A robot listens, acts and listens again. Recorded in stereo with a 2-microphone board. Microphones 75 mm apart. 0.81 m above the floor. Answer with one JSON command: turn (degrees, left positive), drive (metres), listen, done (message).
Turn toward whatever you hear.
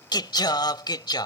{"turn": 75}
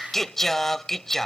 {"done": "Found it: singing, straight ahead."}